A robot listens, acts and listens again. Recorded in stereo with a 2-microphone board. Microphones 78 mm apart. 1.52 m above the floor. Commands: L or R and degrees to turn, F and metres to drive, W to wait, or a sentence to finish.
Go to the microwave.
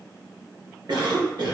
W
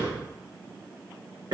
W
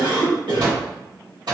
R65
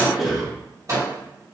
R45
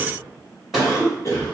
W
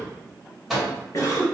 F1.0
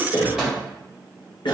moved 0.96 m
R10
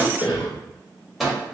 F1.0
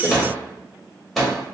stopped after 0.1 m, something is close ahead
I am next to the microwave.